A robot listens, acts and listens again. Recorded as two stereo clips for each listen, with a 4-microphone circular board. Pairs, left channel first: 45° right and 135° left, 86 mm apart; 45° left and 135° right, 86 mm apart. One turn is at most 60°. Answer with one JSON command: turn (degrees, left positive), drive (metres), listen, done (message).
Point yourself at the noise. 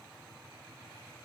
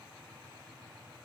{"listen": true}
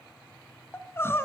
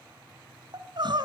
{"turn": -60}
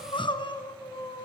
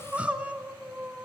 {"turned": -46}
{"turn": -60}
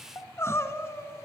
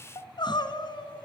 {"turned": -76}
{"turn": 15}
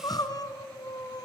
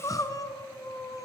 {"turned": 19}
{"done": "Facing the crying."}